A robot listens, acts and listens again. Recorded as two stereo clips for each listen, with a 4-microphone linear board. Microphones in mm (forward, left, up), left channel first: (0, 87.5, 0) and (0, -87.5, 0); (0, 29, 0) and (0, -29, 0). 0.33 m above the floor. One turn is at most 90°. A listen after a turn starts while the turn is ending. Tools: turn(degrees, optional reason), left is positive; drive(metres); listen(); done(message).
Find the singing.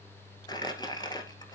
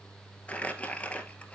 listen()
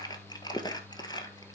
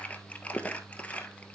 listen()
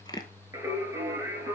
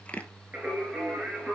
turn(degrees=-15, reason="The singing: about 15° right or 165° right.")
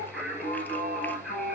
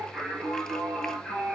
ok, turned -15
turn(degrees=30)
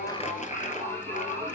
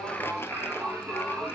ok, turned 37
turn(degrees=-35, reason="So it is at 35° right.")
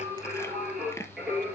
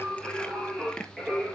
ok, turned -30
done("Found it: singing, straight ahead.")